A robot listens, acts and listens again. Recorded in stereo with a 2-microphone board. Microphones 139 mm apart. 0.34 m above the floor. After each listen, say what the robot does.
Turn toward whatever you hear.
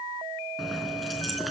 Turn 30° left.
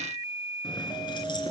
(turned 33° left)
Turn 145° left.
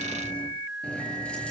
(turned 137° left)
Turn 10° left.
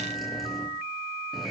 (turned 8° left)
Facing the keys jangling, over 4 m away.